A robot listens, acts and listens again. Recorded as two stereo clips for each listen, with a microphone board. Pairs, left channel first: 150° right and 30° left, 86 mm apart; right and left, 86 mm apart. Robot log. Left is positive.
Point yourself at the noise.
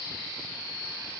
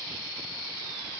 cmd idle
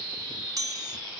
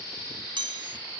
note: The chime: 75° left.
cmd yaw +75
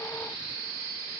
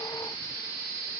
cmd idle
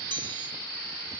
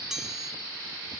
end: Found it: a chime, straight ahead.